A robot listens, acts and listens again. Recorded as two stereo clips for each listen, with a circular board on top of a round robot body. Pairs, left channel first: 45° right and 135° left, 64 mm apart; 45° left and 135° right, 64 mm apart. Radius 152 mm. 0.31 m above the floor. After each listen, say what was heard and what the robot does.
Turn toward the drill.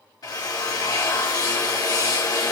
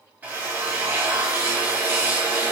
The drill: 65° right. Turn 65° right.
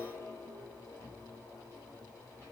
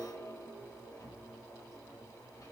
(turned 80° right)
Nothing new. It was at 15° left. Turn 15° left.
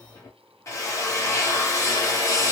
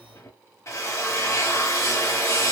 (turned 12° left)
Facing the drill, 1 to 2 m away.